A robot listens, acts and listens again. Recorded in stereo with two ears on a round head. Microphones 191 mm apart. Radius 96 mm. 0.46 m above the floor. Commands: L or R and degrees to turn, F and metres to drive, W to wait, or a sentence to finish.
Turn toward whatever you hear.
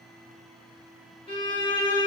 L25
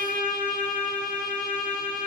L125
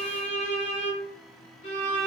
L40
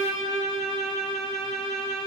Facing the violin.